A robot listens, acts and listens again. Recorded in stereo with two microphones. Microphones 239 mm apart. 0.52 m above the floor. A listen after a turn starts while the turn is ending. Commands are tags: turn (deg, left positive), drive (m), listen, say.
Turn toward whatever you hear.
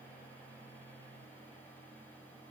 <listen/>
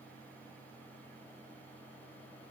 <listen/>
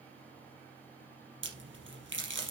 <turn deg="-55"/>
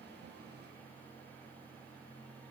<listen/>
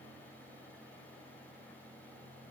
<say>I heard a crack, but can't make it out now. It was about straight ahead or 70° right.</say>